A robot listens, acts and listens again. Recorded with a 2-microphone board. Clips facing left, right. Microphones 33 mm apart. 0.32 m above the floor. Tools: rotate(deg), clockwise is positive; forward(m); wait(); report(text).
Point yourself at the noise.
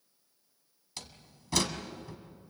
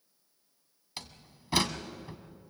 rotate(20)
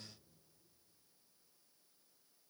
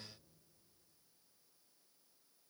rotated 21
wait()
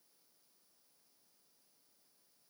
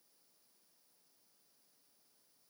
report("I heard a door slam, but can't make it out now. It was about straight ahead or 135° right.")